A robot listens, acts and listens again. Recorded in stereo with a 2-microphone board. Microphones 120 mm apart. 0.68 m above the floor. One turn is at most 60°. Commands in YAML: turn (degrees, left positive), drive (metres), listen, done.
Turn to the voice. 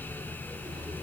listen: true
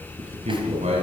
turn: -60
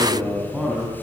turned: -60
turn: -10
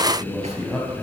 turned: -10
done: "Facing the man speaking, over 4 m away."